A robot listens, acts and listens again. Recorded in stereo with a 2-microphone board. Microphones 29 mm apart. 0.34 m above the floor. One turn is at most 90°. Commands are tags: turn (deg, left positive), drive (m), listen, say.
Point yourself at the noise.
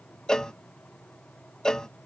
<turn deg="20"/>
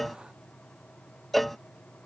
<say>Facing the cowbell.</say>